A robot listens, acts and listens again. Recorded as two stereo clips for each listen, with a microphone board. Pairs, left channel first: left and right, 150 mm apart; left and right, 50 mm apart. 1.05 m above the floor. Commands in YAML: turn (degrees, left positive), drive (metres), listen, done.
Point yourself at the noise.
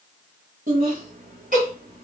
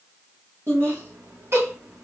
turn: -65
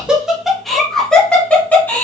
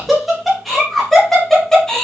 turn: 15
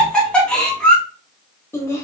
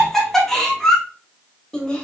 turn: 15
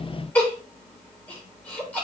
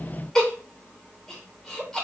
turn: 10
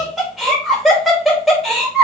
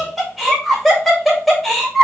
done: "Facing the laughter."